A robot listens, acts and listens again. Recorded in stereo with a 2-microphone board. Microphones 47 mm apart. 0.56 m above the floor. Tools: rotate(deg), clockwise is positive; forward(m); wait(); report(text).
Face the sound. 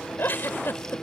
rotate(-45)
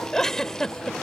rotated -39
rotate(-10)
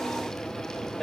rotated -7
wait()
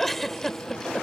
report("Facing the giggle.")